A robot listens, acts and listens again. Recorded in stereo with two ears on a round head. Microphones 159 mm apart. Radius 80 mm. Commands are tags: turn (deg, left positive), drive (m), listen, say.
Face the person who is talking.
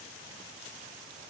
<listen/>
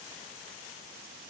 <listen/>
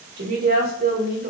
<turn deg="-55"/>
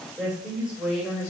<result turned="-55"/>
<say>Facing the woman speaking.</say>